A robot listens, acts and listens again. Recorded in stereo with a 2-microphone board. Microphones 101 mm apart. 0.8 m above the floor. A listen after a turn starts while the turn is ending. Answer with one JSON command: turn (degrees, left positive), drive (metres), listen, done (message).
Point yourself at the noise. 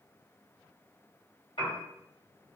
{"turn": 65}
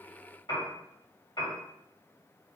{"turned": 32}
{"turn": 60}
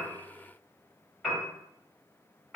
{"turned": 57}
{"done": "Facing the piano, 1 to 2 m away."}